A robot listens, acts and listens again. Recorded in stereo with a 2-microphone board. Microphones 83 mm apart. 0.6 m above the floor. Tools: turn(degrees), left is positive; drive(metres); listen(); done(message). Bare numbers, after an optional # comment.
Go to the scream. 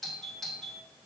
listen()
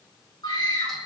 # The scream: about 65° left or 115° left.
turn(65)
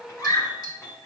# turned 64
# So it is at 45° left.
turn(45)
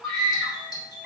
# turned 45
drive(1.0)
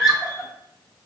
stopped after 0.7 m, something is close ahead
done("Blocked. The scream is further on, straight ahead.")